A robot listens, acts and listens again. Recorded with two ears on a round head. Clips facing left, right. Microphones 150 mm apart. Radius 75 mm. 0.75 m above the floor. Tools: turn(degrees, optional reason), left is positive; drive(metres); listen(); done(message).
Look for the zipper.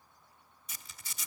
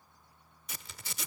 turn(degrees=-55, reason="The zipper: about 55° right or 125° right.")
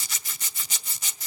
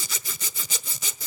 turn(degrees=-70, reason="So it is at 70° right.")
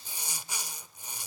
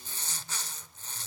turn(degrees=10, reason="The zipper is now 10° left.")
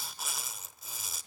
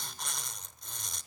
done("Found it: a zipper, straight ahead, 1 to 2 m away.")